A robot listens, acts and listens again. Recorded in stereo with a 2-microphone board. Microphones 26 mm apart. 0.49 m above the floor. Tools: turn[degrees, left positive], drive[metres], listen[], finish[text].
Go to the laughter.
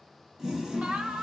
Thought: The laughter: about 70° right or 110° right.
Action: turn[-70]
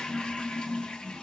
Action: listen[]
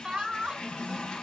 Thought: So it is at 35° right.
Action: turn[-35]
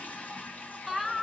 Thought: The laughter is now 10° left.
Action: turn[10]
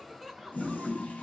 Action: drive[1.0]
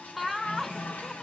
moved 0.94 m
Action: drive[1.0]
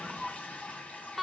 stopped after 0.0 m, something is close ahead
Action: finish[I am next to the laughter.]